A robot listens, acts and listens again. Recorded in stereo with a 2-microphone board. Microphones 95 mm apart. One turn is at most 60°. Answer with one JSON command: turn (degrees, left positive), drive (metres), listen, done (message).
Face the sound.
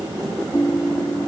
{"turn": 30}
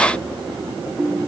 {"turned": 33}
{"done": "Found it: a ringtone, straight ahead."}